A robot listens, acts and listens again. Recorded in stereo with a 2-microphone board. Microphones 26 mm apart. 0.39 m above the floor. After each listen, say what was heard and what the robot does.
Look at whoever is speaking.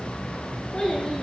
The child speaking: about 25° left or 155° left. Turn 25° left.
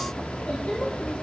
So it is at 125° left. Turn 125° left.
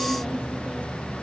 Keep listening.
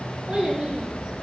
The child speaking is now 35° right. Turn 35° right.
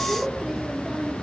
The child speaking is now 15° right. Turn 15° right.
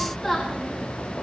Found it: a child speaking, straight ahead.